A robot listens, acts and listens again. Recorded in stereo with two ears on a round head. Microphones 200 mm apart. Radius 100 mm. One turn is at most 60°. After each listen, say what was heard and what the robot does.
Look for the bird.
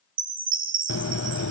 The bird: about 60° left or 120° left. Turn 60° left.
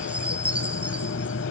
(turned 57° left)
So it is at 60° left. Turn 60° left.
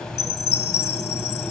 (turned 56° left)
Facing the bird.